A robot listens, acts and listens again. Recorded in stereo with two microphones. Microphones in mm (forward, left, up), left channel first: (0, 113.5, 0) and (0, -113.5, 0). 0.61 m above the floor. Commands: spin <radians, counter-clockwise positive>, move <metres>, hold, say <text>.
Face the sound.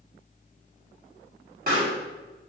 spin -0.79
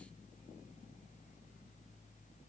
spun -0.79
hold
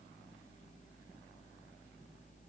say I heard a pop, but can't make it out now. It was about straight ahead or 90° right.